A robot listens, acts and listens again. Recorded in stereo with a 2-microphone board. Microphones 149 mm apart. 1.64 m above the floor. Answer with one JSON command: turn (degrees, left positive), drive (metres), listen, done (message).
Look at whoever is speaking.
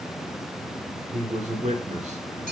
{"turn": -50}
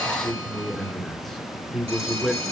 {"done": "Found it: a man speaking, straight ahead, 2 to 4 m away."}